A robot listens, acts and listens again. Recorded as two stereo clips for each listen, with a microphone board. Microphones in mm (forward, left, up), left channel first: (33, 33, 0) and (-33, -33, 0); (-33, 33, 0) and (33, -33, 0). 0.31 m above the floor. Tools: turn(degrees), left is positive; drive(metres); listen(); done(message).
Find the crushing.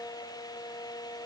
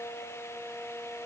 listen()
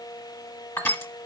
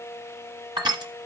turn(degrees=-15)
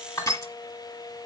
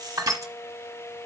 done("Facing the crushing.")